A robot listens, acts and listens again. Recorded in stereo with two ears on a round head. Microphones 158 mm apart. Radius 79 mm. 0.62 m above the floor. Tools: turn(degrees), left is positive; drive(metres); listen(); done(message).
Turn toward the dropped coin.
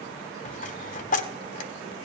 turn(degrees=45)
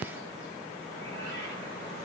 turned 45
listen()
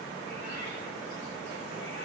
done("I heard a dropped coin, but can't make it out now. It was about straight ahead or 90° left.")